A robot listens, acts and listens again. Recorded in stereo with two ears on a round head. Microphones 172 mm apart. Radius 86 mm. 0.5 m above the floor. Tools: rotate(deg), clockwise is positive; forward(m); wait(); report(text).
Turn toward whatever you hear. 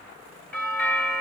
rotate(-30)
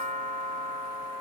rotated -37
rotate(-135)
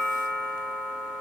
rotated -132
report("Facing the doorbell, 2 to 4 m away.")